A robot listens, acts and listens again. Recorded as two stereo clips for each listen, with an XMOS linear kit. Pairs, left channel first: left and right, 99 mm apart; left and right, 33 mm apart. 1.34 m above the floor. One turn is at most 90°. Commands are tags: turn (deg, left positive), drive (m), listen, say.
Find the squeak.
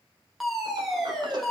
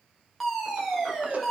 <listen/>
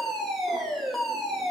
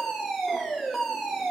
<listen/>
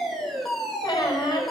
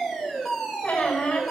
<turn deg="45"/>
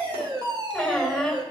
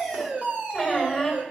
<say>Facing the squeak, over 4 m away.</say>